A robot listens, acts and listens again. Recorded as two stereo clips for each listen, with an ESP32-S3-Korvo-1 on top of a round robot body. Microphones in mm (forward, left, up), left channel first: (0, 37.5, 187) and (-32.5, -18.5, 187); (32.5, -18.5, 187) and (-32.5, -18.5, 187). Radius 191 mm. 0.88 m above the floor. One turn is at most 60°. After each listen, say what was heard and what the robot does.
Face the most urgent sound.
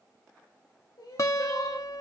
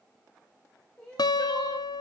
The crying: 75° left. Turn 60° left.
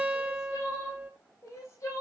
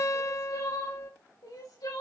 The crying is now 15° left. Turn 15° left.
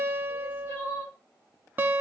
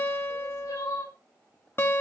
Facing the crying.